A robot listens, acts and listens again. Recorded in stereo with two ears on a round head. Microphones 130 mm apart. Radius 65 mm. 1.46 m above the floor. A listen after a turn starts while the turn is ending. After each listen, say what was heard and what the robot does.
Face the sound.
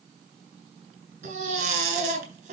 The baby crying: about 55° right or 125° right. Turn 55° right.
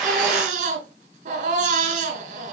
So it is at 65° right. Turn 65° right.
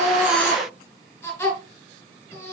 The baby crying is now 15° left. Turn 15° left.
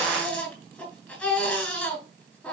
Found it: a baby crying, straight ahead, 2 to 4 m away.